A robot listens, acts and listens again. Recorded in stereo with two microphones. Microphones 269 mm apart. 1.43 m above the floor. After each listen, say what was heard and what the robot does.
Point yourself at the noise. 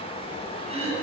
The throat clearing: about 20° right or 160° right. Turn 20° right.
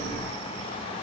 Keep listening.
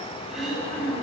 Found it: throat clearing, straight ahead.